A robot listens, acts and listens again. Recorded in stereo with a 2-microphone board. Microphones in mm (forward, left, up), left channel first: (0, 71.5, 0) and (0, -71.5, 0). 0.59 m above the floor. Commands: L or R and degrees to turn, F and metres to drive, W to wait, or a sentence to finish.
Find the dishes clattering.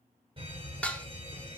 L30
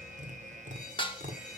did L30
L140
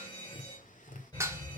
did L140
R20
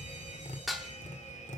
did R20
Found it: dishes clattering, straight ahead.